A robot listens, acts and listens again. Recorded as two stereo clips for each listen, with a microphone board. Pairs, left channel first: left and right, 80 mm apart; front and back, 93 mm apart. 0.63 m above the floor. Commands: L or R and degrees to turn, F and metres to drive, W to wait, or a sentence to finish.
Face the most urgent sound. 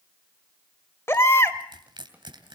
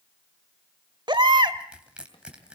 L145
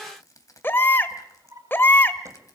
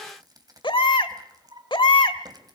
L25
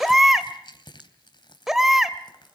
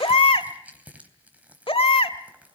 Found it: a baby crying, straight ahead.